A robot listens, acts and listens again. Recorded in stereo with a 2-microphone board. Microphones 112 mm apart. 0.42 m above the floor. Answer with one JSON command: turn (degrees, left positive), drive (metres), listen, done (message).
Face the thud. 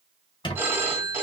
{"listen": true}
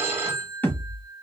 {"turn": 15}
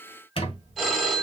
{"listen": true}
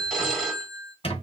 {"done": "I heard a thud, but can't make it out now. It was about straight ahead or 150° left."}